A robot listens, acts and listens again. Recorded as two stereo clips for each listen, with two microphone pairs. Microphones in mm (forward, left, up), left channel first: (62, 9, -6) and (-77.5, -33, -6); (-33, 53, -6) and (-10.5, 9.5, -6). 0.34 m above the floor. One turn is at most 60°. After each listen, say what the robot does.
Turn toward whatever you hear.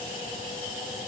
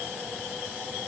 Keep listening.
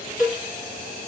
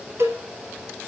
Turn 60° right.
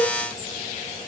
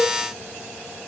Turn 15° right.
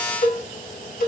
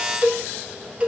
Facing the cowbell.